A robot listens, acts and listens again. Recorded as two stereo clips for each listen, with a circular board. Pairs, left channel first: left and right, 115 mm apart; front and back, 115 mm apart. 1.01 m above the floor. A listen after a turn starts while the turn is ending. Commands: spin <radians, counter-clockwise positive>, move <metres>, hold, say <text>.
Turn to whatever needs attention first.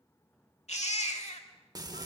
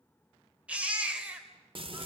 spin 1.75
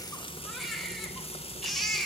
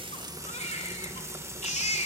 say Facing the baby crying, 2 to 4 m away.